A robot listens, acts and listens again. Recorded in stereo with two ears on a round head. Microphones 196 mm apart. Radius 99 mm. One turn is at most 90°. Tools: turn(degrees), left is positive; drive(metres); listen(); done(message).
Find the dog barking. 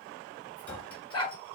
turn(degrees=20)
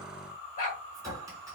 turn(degrees=90)
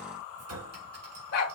turn(degrees=60)
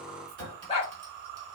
turn(degrees=30)
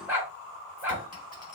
turn(degrees=-10)
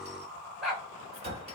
done("Facing the dog barking.")